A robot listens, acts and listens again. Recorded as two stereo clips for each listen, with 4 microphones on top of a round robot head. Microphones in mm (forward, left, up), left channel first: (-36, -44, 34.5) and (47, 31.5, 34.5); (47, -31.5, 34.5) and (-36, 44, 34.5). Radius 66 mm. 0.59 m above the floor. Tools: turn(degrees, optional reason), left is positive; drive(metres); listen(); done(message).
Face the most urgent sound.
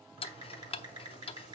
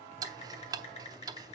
listen()
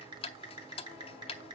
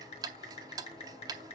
listen()
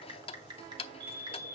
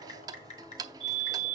turn(degrees=100, reason="The fire alarm: 100° left.")
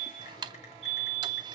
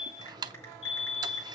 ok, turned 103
done("Facing the fire alarm.")